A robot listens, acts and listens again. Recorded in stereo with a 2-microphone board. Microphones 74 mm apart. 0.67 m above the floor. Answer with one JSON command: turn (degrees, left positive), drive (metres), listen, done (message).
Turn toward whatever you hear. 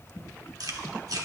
{"turn": -60}
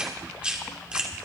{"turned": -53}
{"turn": -15}
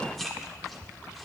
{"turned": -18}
{"done": "Facing the chewing, 1 to 2 m away."}